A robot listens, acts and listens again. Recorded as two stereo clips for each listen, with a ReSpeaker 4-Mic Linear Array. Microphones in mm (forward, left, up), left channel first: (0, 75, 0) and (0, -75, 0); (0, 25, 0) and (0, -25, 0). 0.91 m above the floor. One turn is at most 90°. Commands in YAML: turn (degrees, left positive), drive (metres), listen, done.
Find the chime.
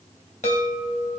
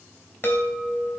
turn: 50
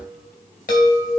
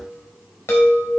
turn: 75
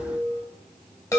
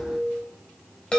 turn: 20
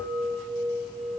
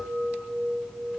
done: "Found it: a chime, straight ahead."